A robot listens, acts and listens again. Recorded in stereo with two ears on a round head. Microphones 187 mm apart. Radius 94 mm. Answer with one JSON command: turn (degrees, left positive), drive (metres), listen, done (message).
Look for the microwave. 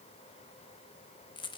{"listen": true}
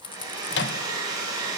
{"turn": 55}
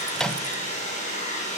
{"done": "Found it: a microwave, straight ahead."}